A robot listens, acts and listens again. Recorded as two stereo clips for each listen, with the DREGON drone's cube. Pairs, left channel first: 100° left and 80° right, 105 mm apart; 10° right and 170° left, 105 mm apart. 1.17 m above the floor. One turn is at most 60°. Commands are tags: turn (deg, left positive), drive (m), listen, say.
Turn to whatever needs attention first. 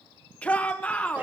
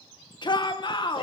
<turn deg="25"/>
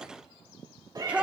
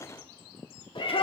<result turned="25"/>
<say>Found it: a shout, straight ahead, 1 to 2 m away.</say>